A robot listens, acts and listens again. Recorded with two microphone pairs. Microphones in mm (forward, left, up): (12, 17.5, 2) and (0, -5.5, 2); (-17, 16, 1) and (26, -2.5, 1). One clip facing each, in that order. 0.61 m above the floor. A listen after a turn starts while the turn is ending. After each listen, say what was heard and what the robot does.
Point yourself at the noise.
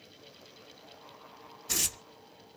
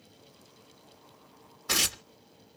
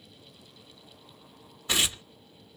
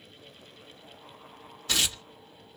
The tearing paper: 135° right. Turn 135° right.
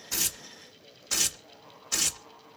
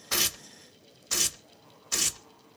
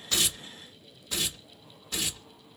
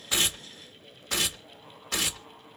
The tearing paper is now 25° right. Turn 25° right.
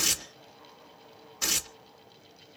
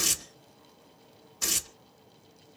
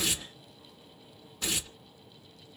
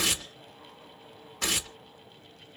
The tearing paper is now 10° right. Turn 10° right.
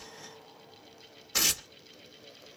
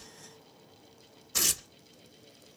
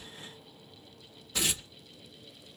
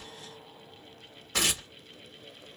Found it: tearing paper, straight ahead, under 1 m away.